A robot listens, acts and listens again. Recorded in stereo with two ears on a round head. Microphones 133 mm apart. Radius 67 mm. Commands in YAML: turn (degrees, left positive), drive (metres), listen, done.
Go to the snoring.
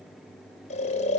turn: 50
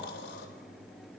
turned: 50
turn: 80
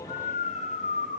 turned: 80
turn: 50
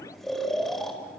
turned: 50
drive: 1.0
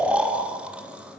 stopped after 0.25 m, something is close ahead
done: "Something is in my way. I am facing the snoring but have not reached it."